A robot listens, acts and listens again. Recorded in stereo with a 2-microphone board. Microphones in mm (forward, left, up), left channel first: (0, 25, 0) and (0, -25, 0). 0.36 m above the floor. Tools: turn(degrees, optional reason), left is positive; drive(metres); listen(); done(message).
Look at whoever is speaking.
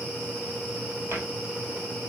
listen()
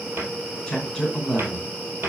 turn(degrees=30)
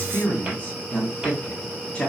turn(degrees=25, reason="The man speaking: about 25° left or 155° left.")
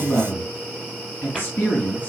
turn(degrees=140, reason="So it is at 140° left.")
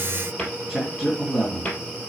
turn(degrees=-15, reason="The man speaking is now 15° right.")
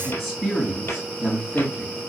done("Facing the man speaking.")